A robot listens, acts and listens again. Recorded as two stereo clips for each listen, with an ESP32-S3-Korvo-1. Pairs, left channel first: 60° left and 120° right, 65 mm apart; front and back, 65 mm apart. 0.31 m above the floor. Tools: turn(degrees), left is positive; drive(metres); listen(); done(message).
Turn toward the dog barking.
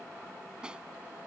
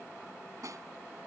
listen()
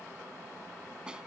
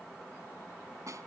listen()
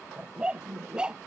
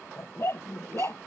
turn(degrees=-45)
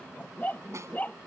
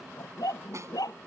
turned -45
done("Facing the dog barking.")